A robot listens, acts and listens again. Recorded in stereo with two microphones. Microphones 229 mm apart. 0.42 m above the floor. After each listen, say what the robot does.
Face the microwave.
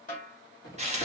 Turn 60° left.
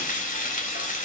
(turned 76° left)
Keep listening.
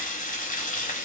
Keep listening.
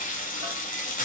I heard a microwave, but can't make it out now. It was about 15° right or 45° left.